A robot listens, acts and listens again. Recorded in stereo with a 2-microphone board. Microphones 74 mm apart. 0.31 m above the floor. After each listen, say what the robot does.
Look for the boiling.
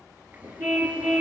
Turn 25° right.
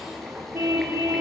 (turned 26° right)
Found it: boiling, straight ahead.